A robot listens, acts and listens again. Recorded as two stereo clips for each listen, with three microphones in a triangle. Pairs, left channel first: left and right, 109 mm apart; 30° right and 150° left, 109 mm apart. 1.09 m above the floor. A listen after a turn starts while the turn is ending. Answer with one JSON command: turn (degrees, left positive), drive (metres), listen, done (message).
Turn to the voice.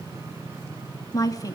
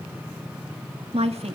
{"turn": 145}
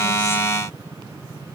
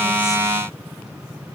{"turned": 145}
{"listen": true}
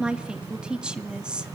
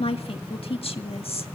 {"turn": -10}
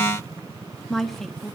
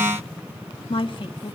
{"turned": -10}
{"done": "Found it: a woman speaking, straight ahead."}